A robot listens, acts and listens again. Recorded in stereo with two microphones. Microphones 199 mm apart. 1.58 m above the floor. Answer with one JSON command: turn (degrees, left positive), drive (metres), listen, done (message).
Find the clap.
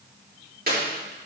{"turn": -50}
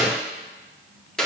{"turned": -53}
{"done": "Facing the clap."}